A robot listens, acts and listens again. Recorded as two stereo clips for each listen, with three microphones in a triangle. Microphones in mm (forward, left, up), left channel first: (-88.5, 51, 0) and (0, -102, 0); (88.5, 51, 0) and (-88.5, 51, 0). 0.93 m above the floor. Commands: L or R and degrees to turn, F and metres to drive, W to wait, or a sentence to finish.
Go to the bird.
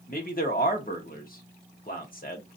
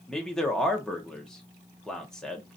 W
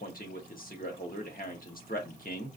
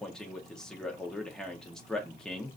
W
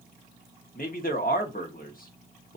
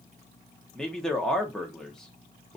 I can't make out a bird to turn to.